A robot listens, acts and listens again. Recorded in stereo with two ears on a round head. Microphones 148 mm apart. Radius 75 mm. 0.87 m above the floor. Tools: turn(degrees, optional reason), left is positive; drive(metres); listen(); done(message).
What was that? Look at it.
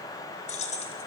turn(degrees=40, reason="The keys jangling: about 40° left or 140° left.")
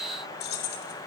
turn(degrees=115, reason="So it is at 115° left.")
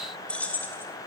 turn(degrees=10, reason="The keys jangling is now 10° left.")
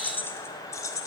turn(degrees=20, reason="The keys jangling is now 20° left.")
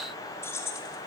turn(degrees=20, reason="The keys jangling is now 20° left.")
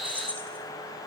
turn(degrees=10, reason="The keys jangling is now 10° left.")
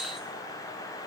listen()
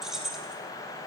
done("Facing the keys jangling.")